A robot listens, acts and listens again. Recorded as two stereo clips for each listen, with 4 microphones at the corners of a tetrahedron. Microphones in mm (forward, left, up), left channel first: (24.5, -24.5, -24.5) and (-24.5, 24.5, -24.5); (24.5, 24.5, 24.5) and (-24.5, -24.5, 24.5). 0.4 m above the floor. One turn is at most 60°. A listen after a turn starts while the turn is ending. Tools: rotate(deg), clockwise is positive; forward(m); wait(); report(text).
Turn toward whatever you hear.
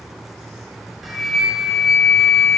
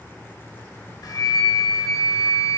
rotate(-45)
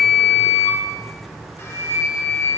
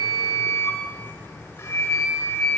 report("Found it: a flute, straight ahead, 1 to 2 m away.")